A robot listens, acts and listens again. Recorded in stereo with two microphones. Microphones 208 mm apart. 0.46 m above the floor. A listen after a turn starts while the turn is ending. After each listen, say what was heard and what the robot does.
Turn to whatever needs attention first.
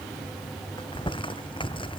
Keep listening.
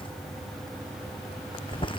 Keep listening.
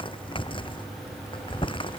I can't make out anything urgent to turn to.